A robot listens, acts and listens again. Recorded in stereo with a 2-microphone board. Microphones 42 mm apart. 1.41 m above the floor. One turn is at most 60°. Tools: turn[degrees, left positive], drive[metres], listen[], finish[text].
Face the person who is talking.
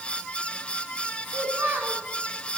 Thought: The child speaking: about 50° right or 130° right.
Action: turn[-50]
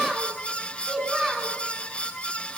Action: finish[Found it: a child speaking, straight ahead.]